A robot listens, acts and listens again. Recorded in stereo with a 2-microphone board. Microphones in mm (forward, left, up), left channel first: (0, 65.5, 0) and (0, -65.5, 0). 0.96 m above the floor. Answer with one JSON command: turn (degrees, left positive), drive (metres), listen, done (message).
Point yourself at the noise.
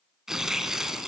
{"turn": -30}
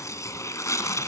{"turn": 25}
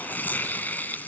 {"turn": 15}
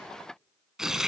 {"done": "Facing the tearing paper."}